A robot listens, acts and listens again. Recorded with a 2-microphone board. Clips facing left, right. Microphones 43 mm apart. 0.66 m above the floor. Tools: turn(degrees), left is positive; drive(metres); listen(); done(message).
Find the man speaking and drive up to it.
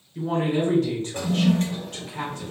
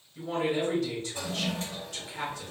turn(degrees=60)
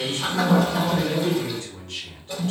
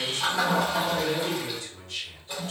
turn(degrees=55)
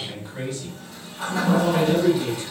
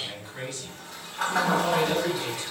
drive(metres=1.0)
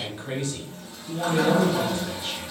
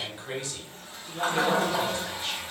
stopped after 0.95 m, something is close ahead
done("I am next to the man speaking.")